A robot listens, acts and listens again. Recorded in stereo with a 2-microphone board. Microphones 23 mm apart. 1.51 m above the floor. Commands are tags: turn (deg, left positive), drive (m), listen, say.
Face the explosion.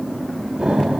<turn deg="-30"/>
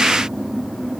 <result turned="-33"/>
<listen/>
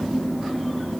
<say>I heard an explosion, but can't make it out now. It was about 5° left or 115° right.</say>